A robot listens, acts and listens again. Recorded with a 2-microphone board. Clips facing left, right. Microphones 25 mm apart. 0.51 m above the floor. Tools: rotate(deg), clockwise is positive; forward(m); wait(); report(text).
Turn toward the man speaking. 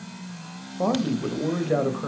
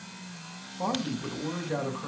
rotate(-20)
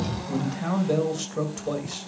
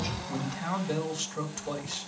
report("Found it: a man speaking, straight ahead, 1 to 2 m away.")